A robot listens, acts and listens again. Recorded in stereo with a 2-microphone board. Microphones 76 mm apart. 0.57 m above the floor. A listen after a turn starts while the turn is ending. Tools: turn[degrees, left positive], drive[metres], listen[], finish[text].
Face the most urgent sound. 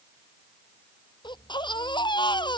Action: turn[90]
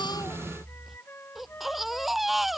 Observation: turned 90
Action: finish[Found it: a baby crying, straight ahead.]